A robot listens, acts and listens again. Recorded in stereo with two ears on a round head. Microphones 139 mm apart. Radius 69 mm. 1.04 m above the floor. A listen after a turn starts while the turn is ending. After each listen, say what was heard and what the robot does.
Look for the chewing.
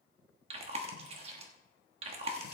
The chewing: about 40° right or 140° right. Turn 40° right.
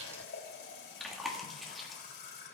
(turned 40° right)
Found it: chewing, straight ahead, 1 to 2 m away.